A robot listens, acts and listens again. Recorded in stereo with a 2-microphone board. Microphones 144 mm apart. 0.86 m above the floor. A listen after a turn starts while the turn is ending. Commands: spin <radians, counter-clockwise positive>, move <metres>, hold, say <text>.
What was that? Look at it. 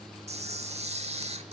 spin -0.87
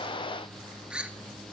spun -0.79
spin -0.17
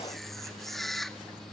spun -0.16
say Facing the camera shutter.